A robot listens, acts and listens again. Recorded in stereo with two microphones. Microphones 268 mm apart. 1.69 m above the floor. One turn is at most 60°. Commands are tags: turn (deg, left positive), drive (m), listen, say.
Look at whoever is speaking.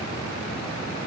<listen/>
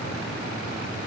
<listen/>
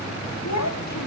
<turn deg="60"/>
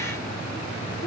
<listen/>
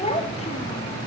<turn deg="20"/>
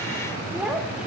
<say>Found it: a child speaking, straight ahead, 1 to 2 m away.</say>